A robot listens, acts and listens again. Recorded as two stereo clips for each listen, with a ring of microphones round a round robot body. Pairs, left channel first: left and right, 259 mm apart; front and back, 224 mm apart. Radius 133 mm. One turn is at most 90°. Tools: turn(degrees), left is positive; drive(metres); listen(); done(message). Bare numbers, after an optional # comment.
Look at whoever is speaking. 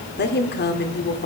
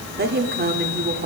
# The woman speaking: 140° left.
turn(90)
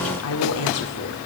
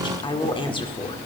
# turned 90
# The woman speaking is now 65° left.
turn(65)
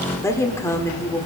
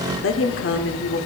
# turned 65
# The woman speaking is now 10° left.
turn(10)
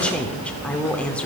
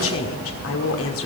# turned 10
done("Found it: a woman speaking, straight ahead.")